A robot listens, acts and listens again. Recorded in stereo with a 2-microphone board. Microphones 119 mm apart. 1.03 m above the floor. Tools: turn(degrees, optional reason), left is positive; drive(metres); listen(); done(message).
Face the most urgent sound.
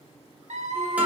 turn(degrees=-90)
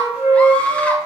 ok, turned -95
turn(degrees=10, reason="So it is at 10° left.")
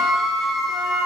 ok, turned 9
done("Facing the scream.")